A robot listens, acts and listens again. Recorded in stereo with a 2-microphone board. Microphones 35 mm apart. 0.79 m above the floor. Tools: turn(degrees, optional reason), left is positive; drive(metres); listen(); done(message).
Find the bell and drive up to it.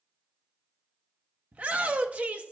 listen()
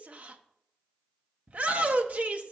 listen()
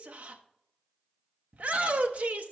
done("I can't make out a bell, only a shout.")